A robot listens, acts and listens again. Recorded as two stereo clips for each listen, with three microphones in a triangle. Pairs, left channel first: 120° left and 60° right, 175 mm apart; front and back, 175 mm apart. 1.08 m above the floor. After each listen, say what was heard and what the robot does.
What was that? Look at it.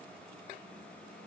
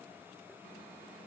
Keep listening.
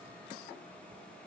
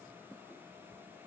Keep listening.
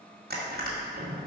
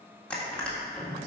The crushing: 85° right. Turn 85° right.
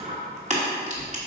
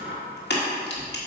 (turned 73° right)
The crushing is now 10° right. Turn 10° right.
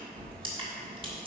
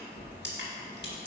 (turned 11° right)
Found it: crushing, straight ahead.